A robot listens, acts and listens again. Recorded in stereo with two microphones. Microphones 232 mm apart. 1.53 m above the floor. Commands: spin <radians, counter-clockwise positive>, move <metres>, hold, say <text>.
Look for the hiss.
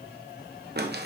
hold
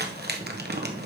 hold
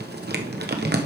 say I can't make out a hiss to turn to.